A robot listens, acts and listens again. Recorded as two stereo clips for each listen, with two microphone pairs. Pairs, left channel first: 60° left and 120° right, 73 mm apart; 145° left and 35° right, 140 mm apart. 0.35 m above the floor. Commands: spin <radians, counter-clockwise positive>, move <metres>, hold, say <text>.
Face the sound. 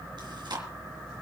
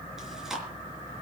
spin -2.09
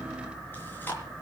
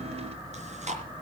say Found it: chewing, straight ahead.